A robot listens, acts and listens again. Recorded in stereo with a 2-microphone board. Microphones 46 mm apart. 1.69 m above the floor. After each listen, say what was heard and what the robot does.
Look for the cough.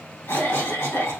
The cough: about 65° left or 115° left. Turn 65° left.
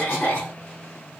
So it is at 40° left. Turn 40° left.
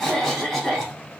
Found it: a cough, straight ahead, 2 to 4 m away.